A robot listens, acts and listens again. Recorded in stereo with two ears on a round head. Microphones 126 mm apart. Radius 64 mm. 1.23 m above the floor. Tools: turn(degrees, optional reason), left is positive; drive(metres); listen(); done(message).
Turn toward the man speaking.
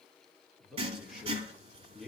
turn(degrees=30)
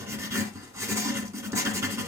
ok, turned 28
listen()
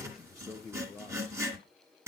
turn(degrees=30)
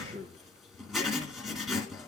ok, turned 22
turn(degrees=20, reason="The man speaking: about 20° left or 160° left.")
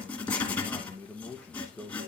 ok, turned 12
turn(degrees=30)
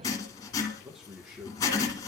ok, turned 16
turn(degrees=-30)
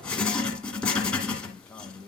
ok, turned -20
turn(degrees=30)
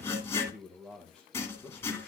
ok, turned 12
done("Facing the man speaking, 1 to 2 m away.")